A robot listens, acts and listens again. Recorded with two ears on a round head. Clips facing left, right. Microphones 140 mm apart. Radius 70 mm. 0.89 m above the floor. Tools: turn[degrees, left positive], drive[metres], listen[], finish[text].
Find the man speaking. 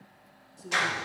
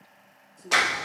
Action: turn[30]
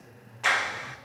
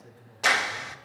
Thought: So it is at 35° right.
Action: turn[-35]
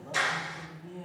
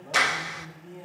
Thought: The man speaking is now 15° right.
Action: turn[-15]
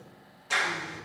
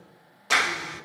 Action: listen[]
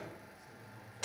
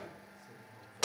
Thought: The man speaking is now 15° right.
Action: turn[-15]
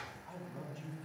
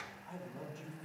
Thought: The man speaking is now 10° right.
Action: turn[-10]
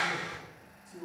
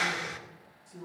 Action: finish[Facing the man speaking.]